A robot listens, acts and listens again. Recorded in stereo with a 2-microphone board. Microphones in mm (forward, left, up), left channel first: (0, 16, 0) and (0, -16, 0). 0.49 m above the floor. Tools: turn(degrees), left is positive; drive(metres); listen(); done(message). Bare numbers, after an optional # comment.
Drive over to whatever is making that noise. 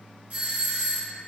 # The doorbell: about 40° right or 140° right.
turn(-40)
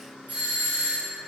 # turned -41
# So it is at 90° right.
turn(-90)
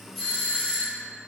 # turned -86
drive(1.0)
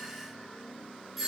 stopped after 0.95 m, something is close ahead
# The doorbell is now 15° right.
turn(-15)
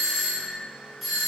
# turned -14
done("I am next to the doorbell.")